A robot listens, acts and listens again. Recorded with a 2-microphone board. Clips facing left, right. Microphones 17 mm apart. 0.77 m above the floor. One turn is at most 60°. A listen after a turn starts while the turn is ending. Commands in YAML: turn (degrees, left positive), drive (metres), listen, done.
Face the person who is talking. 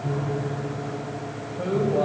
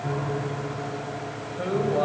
turn: -25
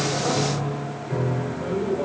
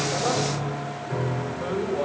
turn: -60
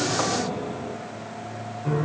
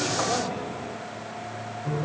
turn: -60
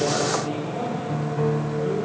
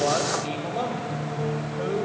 turn: -55
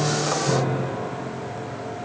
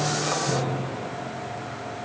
listen: true
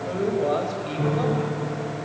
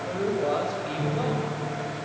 turn: 10
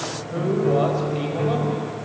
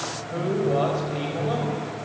done: "Facing the man speaking."